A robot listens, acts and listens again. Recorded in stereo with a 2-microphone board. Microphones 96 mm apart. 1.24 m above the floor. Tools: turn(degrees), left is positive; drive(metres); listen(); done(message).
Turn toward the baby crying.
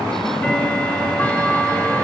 listen()
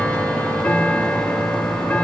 listen()
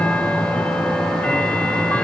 done("I can't make out a baby crying to turn to.")